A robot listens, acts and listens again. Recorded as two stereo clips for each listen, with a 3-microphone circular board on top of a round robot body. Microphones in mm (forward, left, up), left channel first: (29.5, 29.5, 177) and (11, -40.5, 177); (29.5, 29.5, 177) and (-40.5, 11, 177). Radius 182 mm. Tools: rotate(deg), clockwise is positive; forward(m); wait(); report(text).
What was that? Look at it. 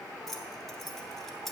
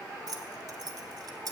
rotate(-165)
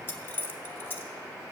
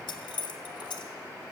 rotate(-15)
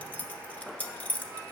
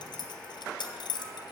report("Found it: keys jangling, straight ahead.")